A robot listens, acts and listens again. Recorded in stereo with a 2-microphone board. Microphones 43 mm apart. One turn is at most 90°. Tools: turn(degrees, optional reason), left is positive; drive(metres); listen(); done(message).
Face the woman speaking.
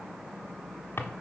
listen()
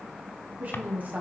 turn(degrees=-40, reason="The woman speaking: about 40° right or 140° right.")
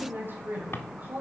turn(degrees=-40, reason="The woman speaking: about 40° right or 140° right.")
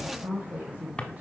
turn(degrees=-35, reason="The woman speaking: about 35° right or 145° right.")
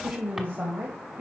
turn(degrees=-45, reason="The woman speaking: about 45° right or 135° right.")
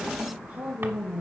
turn(degrees=-45, reason="The woman speaking: about 45° right or 135° right.")
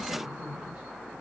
turn(degrees=-20, reason="So it is at 20° right.")
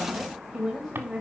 done("Facing the woman speaking, 1 to 2 m away.")